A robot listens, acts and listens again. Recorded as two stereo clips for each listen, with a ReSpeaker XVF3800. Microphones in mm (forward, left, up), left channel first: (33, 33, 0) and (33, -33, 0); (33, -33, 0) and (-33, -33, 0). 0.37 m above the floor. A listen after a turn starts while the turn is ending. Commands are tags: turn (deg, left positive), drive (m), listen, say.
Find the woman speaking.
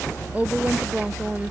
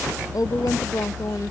<turn deg="-20"/>
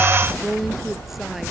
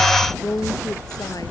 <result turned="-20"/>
<say>Facing the woman speaking.</say>